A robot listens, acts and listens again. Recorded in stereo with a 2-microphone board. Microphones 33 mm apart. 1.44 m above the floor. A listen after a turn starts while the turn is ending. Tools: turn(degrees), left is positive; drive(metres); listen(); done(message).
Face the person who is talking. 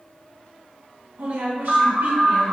turn(degrees=-90)
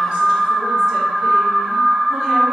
listen()
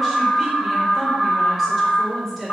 done("Facing the woman speaking, 1 to 2 m away.")